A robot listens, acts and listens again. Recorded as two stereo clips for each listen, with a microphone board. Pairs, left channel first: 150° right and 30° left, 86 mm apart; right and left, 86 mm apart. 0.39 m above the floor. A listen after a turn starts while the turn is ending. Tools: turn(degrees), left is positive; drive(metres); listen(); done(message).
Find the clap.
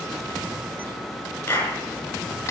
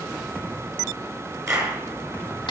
turn(degrees=145)
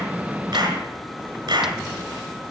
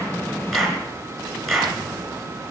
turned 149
done("Facing the clap.")